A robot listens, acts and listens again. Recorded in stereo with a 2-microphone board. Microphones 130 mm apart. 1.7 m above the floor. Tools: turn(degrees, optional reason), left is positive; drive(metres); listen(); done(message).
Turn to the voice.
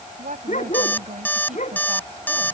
turn(degrees=-90)
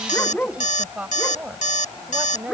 turn(degrees=-10, reason="So it is at 10° right.")
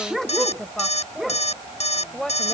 done("Facing the woman speaking.")